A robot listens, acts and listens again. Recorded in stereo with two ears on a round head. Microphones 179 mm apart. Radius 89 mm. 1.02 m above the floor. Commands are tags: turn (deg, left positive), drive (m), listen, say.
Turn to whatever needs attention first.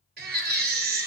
<turn deg="-50"/>
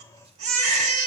<turn deg="-75"/>
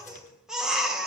<say>Facing the baby crying, 2 to 4 m away.</say>